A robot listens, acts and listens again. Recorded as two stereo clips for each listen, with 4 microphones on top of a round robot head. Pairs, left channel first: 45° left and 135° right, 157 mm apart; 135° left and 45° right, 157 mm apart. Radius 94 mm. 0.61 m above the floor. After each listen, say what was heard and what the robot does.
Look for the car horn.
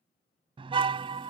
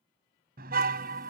The car horn: 80° right. Turn 80° right.
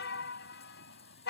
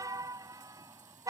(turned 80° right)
The car horn is now 25° left. Turn 25° left.
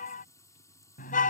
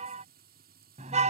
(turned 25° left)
Found it: a car horn, straight ahead.